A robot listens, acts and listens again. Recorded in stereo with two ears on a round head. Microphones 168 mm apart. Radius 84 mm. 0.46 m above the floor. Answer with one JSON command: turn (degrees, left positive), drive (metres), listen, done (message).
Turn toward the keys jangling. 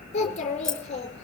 {"turn": 30}
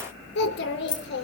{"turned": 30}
{"turn": 155}
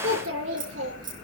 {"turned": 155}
{"turn": -25}
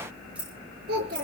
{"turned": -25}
{"done": "Found it: keys jangling, straight ahead, over 4 m away."}